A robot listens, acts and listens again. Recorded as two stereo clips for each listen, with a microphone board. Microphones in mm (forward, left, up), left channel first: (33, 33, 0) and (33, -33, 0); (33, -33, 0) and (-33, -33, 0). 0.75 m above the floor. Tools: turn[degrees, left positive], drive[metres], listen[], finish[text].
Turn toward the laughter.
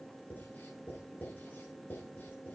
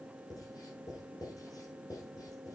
Action: listen[]
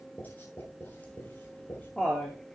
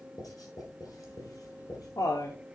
Thought: The laughter: 10° left.
Action: turn[10]
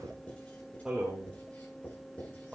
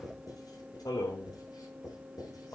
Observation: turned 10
Thought: The laughter is now 20° right.
Action: turn[-20]
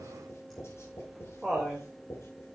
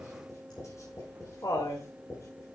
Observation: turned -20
Action: finish[Found it: laughter, straight ahead, 2 to 4 m away.]